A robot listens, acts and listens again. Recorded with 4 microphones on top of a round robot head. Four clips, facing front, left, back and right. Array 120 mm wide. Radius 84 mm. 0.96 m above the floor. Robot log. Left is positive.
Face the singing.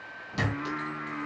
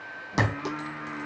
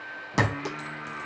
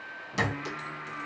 note: The singing: 40° left.
cmd yaw +40
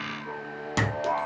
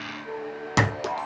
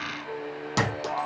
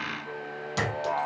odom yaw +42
note: The singing is now 15° left.
cmd yaw +15
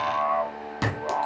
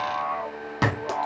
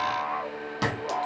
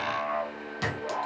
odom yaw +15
note: The singing is now 20° left.
cmd yaw +20
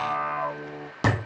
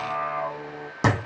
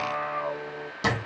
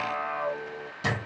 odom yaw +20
note: The singing is now 15° left.
cmd yaw +15
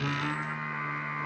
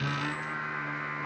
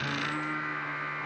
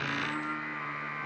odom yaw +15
note: The singing is now 25° left.
cmd yaw +25
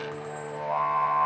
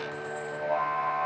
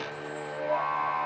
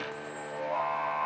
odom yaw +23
end: Found it: singing, straight ahead, 2 to 4 m away.